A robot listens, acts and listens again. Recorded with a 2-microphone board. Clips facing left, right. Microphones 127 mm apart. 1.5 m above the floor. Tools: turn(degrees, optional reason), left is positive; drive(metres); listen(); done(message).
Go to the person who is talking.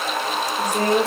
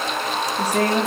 turn(degrees=-75, reason="The woman speaking: about 75° right or 105° right.")
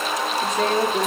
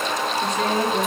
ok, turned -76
drive(metres=1.0)
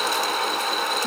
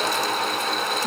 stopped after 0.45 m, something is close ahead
listen()
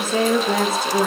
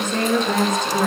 turn(degrees=10, reason="The woman speaking is now 10° left.")
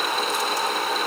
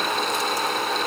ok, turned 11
listen()
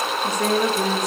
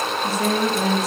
done("Something is in my way. I am facing the woman speaking but have not reached it.")